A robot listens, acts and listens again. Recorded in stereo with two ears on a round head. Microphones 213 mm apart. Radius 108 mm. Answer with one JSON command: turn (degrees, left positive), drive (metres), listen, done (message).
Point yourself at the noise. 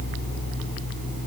{"listen": true}
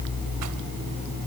{"listen": true}
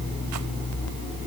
{"done": "I can't make out anything."}